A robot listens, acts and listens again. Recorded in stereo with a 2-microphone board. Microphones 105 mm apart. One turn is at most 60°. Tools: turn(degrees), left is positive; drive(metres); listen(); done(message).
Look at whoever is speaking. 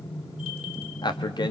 turn(degrees=45)
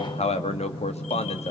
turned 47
turn(degrees=60)
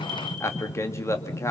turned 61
turn(degrees=25)
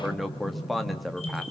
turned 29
done("Found it: a man speaking, straight ahead.")